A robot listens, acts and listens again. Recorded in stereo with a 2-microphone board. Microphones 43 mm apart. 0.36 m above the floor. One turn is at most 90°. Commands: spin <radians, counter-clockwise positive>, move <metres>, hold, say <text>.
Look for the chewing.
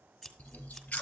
spin 0.61
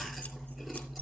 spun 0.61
say Found it: chewing, straight ahead, 1 to 2 m away.